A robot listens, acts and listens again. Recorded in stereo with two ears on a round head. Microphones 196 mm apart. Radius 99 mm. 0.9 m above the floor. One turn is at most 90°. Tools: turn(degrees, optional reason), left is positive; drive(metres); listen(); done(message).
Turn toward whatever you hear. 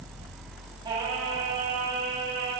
turn(degrees=-45, reason="The singing: about 45° right or 135° right.")
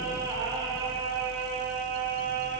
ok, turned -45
turn(degrees=-45, reason="The singing: about 45° right or 135° right.")
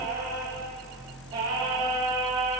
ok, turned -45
turn(degrees=-20, reason="So it is at 20° right.")
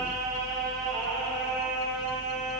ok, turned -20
done("Facing the singing.")